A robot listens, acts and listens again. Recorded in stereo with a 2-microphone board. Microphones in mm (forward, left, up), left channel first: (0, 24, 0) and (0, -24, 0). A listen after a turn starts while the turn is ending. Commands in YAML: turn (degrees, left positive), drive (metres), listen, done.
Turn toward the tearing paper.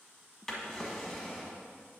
listen: true
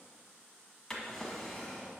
listen: true
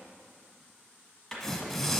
turn: 30
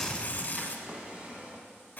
turn: 140
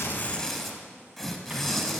done: "Found it: tearing paper, straight ahead."